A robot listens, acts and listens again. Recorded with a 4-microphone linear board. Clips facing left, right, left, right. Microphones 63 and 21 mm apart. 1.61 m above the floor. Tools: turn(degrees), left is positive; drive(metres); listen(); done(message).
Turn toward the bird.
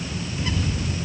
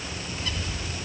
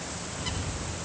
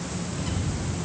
turn(degrees=25)
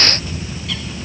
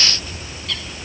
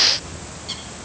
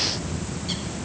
done("Found it: a bird, straight ahead.")